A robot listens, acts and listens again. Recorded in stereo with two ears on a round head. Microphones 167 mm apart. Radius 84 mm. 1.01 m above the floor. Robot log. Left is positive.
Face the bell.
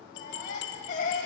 note: The bell: about 65° left or 115° left.
cmd yaw +65
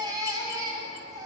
cmd idle
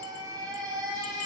cmd idle
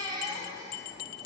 note: So it is at 50° left.
cmd yaw +50
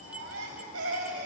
end: Facing the bell.